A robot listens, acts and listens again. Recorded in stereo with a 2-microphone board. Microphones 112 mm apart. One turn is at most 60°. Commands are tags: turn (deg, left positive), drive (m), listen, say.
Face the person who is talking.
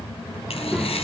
<turn deg="-30"/>
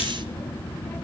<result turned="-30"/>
<listen/>
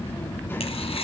<listen/>
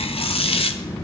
<turn deg="20"/>
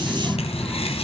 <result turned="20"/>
<say>Facing the child speaking, 1 to 2 m away.</say>